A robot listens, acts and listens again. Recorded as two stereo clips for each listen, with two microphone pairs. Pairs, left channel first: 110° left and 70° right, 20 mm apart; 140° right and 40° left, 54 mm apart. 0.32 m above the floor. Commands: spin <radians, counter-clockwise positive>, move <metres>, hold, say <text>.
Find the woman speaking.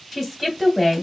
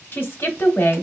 spin -2.88
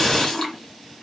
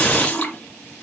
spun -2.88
hold
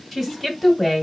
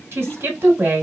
spin 0.26
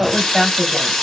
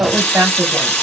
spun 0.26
say Found it: a woman speaking, straight ahead, 1 to 2 m away.